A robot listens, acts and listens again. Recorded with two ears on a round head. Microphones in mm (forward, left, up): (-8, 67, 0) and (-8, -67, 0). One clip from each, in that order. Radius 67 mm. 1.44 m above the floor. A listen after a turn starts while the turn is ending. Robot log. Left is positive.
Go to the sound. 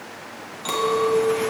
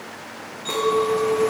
cmd yaw +90
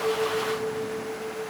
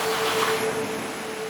note: So it is at 10° right.
cmd yaw -10
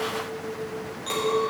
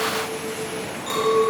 cmd fwd 1.0
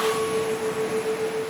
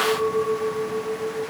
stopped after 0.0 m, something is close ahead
note: The clink is now 10° right.
cmd yaw -10
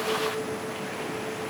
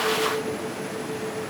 cmd idle
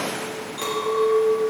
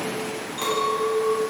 end: Something is in my way. I am facing the clink but have not reached it.